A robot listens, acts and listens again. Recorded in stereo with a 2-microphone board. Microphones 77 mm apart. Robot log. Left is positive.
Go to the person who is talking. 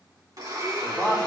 note: The man speaking: about 25° right or 155° right.
cmd yaw -25
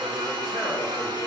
cmd idle
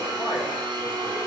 cmd idle
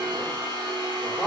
cmd fwd 1.0
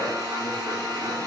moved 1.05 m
cmd idle
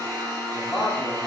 cmd fwd 1.0
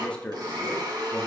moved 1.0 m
note: The man speaking is now 15° left.
cmd yaw +15
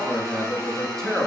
cmd fwd 1.0
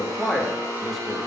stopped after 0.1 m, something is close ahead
end: Arrived at the man speaking, straight ahead.